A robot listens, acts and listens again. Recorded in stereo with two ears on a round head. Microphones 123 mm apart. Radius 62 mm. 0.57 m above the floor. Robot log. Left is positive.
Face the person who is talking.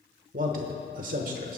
note: The man speaking: about 65° right or 115° right.
cmd yaw -65
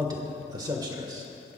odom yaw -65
note: So it is at 30° right.
cmd yaw -30
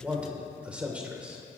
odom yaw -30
note: The man speaking is now 10° right.
cmd yaw -10
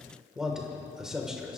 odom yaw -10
end: Facing the man speaking, 1 to 2 m away.